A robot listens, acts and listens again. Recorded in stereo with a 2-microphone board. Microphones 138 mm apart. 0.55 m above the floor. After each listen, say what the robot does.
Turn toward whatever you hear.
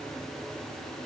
Keep listening.
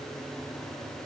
Keep listening.
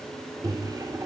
Turn 25° right.
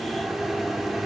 Found it: a microwave, straight ahead.